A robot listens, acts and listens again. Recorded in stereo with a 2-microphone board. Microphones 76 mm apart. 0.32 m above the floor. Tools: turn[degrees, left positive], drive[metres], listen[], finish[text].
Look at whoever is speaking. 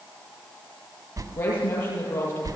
Thought: The woman speaking: about 25° left or 155° left.
Action: turn[25]
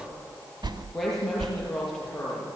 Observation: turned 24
Action: finish[Found it: a woman speaking, straight ahead, over 4 m away.]